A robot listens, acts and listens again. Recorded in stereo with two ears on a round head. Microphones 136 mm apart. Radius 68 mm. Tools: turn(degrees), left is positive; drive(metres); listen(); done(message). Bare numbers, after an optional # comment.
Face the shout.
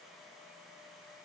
listen()
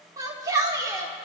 # The shout: about 25° right or 155° right.
turn(-25)
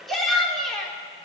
done("Facing the shout, 2 to 4 m away.")